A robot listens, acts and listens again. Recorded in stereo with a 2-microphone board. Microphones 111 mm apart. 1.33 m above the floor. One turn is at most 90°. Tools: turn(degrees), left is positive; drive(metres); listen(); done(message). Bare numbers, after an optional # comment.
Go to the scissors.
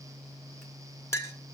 listen()
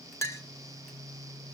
listen()
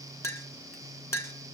done("I can't make out scissors, only a clink.")